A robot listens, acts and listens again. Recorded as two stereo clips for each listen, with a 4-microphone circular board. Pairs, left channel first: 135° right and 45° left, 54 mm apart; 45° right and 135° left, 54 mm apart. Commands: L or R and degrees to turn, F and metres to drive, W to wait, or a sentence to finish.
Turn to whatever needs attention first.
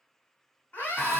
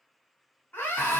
R90
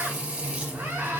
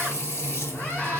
W
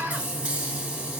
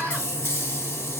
L15
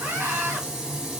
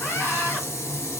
Facing the scream, 1 to 2 m away.